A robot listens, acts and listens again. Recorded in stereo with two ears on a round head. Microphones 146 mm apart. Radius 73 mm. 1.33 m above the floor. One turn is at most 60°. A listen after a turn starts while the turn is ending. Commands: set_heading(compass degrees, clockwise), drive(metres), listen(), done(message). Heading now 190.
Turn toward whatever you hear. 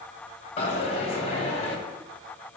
set_heading(150)
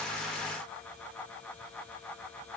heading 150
listen()
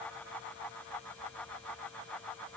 done("I heard a dropped coin, but can't make it out now. It was about straight ahead or 100° left.")